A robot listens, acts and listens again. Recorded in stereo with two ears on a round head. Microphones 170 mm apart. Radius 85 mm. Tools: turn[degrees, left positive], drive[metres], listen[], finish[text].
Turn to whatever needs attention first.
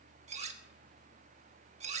Action: listen[]
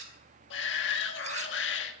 Action: turn[90]
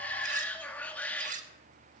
Thought: So it is at 10° left.
Action: turn[10]
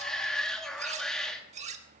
Action: finish[Facing the shout.]